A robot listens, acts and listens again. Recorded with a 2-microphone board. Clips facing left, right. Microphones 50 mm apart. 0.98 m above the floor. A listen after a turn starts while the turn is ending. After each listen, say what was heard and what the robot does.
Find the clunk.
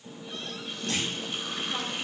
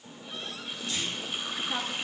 The clunk: about 60° left or 120° left. Turn 60° left.
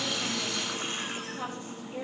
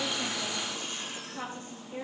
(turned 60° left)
Keep listening.
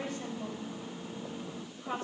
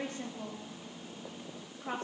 I heard a clunk, but can't make it out now. It was about straight ahead or 60° left.